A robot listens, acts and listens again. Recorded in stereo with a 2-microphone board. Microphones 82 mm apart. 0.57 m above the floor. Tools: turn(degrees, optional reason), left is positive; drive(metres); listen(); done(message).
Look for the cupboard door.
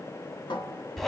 turn(degrees=90)
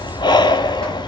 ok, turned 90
listen()
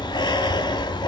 listen()
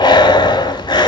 done("I heard a cupboard door from this way, but can't make it out now.")